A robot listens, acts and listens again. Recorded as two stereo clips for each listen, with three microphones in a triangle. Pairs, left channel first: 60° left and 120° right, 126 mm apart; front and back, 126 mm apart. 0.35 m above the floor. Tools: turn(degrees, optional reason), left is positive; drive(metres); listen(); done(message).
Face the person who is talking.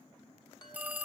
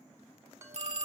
listen()
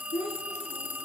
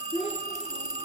turn(degrees=35, reason="The child speaking: 35° left.")
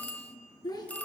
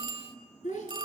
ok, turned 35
done("Facing the child speaking, 2 to 4 m away.")